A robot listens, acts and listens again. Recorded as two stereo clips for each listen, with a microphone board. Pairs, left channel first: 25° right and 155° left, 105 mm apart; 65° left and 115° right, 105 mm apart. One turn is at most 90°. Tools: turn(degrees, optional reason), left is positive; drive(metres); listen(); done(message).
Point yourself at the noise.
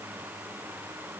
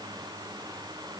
listen()
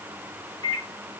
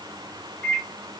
turn(degrees=90, reason="The microwave: 145° left.")
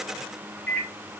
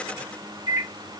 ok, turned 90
turn(degrees=60, reason="The microwave is now 60° left.")
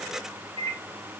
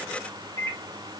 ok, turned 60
turn(degrees=15, reason="The microwave is now 15° left.")
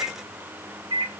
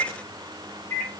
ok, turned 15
done("Facing the microwave.")